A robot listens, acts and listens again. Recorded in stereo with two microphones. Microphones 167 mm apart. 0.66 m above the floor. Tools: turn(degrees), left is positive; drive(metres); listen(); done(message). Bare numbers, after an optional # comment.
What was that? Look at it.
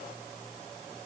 listen()
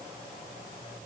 listen()
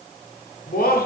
# The laughter: about 65° left or 115° left.
turn(65)
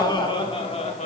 # So it is at 45° left.
turn(45)
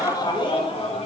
# The laughter is now 40° left.
turn(40)
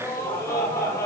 # The laughter is now 20° left.
turn(20)
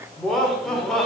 done("Found it: laughter, straight ahead, 1 to 2 m away.")